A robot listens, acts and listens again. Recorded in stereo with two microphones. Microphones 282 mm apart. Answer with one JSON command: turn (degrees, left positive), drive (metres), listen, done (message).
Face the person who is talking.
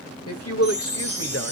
{"turn": 55}
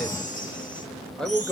{"done": "Facing the man speaking."}